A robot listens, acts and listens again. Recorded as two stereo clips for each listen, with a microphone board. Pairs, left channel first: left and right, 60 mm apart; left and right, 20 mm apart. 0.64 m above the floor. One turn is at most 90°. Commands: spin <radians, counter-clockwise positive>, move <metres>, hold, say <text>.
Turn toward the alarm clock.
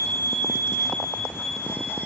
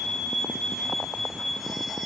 hold
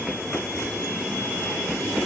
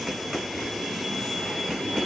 hold
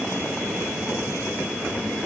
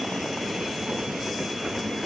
say I can't make out an alarm clock.